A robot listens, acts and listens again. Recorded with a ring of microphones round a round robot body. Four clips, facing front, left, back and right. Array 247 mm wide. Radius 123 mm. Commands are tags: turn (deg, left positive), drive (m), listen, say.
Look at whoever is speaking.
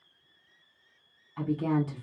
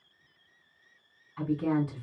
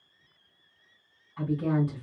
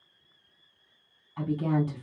<turn deg="-50"/>
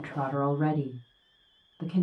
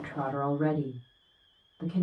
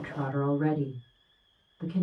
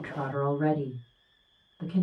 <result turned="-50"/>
<say>Facing the woman speaking.</say>